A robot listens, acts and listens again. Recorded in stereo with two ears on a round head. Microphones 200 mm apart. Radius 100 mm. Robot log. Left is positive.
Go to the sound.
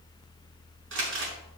note: The crumpling: about 60° right or 120° right.
cmd yaw -60
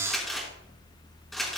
cmd fwd 1.0
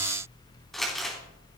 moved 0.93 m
cmd fwd 1.0
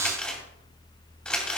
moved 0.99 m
cmd fwd 1.0
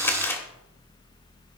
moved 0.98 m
note: The crumpling is now 10° left.
cmd yaw +10
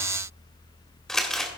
cmd fwd 1.0
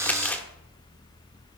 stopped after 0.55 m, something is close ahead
end: Arrived at the crumpling, straight ahead.